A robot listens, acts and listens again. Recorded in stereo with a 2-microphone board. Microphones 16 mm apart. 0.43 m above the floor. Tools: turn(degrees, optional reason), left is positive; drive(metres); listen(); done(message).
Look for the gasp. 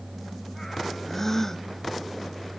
turn(degrees=30, reason="The gasp: about 30° left or 150° left.")
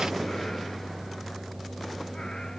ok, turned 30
listen()
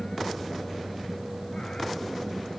done("I heard a gasp, but can't make it out now. It was about straight ahead or 120° left.")